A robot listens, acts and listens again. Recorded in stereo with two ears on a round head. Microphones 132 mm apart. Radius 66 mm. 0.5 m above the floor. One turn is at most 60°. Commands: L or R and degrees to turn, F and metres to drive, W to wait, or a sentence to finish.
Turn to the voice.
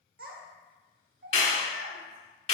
R60
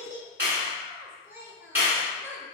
R15
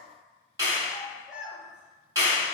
Found it: a child speaking, straight ahead, under 1 m away.